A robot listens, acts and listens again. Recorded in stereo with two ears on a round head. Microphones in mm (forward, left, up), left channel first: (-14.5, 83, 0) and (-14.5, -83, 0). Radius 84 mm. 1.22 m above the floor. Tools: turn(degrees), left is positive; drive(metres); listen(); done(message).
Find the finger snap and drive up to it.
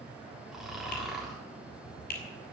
turn(degrees=50)
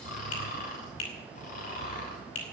turn(degrees=80)
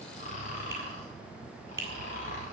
turn(degrees=-15)
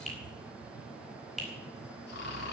drive(metres=1.0)
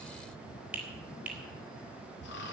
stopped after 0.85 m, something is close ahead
done("Blocked. The finger snap is further on, straight ahead.")